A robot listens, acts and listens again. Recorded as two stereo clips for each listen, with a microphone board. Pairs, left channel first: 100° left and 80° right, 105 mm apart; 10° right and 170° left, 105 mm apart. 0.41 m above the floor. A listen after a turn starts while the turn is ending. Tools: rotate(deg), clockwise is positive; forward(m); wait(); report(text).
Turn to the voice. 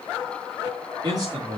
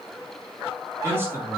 rotate(125)
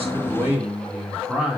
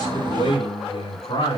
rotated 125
report("Facing the man speaking, over 4 m away.")